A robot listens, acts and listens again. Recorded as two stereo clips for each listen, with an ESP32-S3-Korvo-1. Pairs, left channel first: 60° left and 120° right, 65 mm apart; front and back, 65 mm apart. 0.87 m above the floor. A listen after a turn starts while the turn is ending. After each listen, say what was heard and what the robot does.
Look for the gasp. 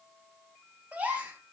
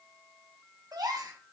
The gasp: 175° left. Turn 175° left.
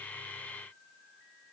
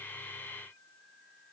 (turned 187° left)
Nothing new. It was at 15° right. Turn 15° right.
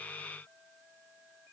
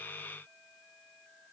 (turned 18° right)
Facing where the gasp came from. I can't hear it now.